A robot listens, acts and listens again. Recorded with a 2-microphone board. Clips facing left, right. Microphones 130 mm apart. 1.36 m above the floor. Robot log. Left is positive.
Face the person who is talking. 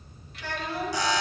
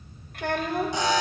note: The child speaking: about 55° right or 125° right.
cmd yaw -55
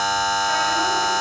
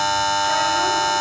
cmd idle
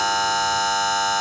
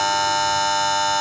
cmd idle
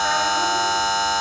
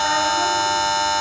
end: I heard a child speaking, but can't make it out now. It was about straight ahead or 70° right.